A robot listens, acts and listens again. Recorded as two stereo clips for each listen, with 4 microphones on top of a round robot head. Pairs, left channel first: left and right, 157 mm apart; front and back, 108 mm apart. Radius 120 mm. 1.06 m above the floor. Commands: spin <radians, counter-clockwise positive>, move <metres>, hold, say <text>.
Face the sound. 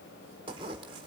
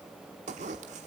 spin -2.71
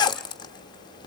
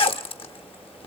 spin 0.52
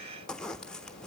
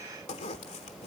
say Facing the zipper, under 1 m away.